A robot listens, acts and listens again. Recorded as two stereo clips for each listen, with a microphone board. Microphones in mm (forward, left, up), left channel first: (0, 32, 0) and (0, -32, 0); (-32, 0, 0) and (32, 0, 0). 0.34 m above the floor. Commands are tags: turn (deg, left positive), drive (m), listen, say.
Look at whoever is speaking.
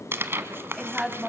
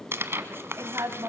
<say>Found it: a woman speaking, straight ahead, 2 to 4 m away.</say>